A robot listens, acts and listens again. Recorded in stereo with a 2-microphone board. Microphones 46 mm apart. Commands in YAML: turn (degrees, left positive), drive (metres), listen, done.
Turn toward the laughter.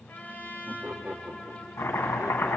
turn: -50
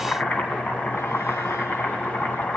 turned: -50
listen: true
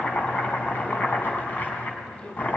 turn: 30
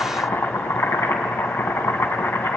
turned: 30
listen: true
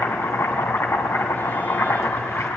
listen: true
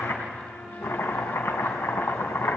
done: "I heard laughter from this way, but can't make it out now."